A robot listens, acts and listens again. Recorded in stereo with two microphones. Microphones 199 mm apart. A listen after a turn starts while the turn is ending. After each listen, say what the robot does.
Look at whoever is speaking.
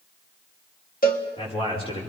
Turn 30° left.
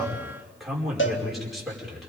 Found it: a man speaking, straight ahead.